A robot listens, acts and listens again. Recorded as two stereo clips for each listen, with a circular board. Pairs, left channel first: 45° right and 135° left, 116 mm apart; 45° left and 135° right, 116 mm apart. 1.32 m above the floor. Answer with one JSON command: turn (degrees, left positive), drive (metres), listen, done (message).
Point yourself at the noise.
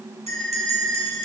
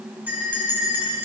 {"turn": 150}
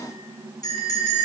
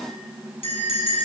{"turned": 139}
{"turn": 10}
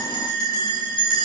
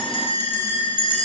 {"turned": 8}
{"done": "Facing the bell, over 4 m away."}